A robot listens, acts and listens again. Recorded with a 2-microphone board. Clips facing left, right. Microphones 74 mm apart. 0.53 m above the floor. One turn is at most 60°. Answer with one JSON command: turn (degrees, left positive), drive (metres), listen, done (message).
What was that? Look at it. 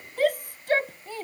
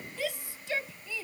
{"turn": 55}
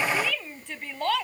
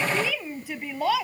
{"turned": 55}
{"done": "Found it: a shout, straight ahead."}